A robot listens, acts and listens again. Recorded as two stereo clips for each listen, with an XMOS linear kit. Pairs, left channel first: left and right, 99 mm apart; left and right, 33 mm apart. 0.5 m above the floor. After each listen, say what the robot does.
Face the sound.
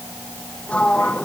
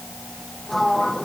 Turn 30° left.
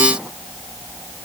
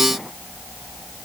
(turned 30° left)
Keep listening.
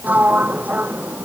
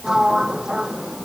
Turn 15° right.
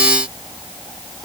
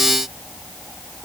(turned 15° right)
Keep listening.
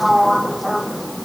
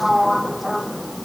Found it: a sliding door, straight ahead.